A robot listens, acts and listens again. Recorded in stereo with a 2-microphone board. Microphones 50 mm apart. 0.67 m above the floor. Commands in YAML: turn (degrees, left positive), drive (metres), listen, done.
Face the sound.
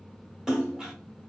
turn: -30
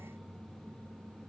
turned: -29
listen: true
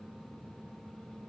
done: "I heard a splash, but can't make it out now. It was about 20° left or 140° right."